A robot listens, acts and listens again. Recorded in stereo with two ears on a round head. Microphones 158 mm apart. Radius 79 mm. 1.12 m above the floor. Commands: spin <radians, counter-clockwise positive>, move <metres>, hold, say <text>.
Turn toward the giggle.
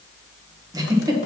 spin -0.35
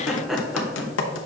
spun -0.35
say Found it: a giggle, straight ahead, 1 to 2 m away.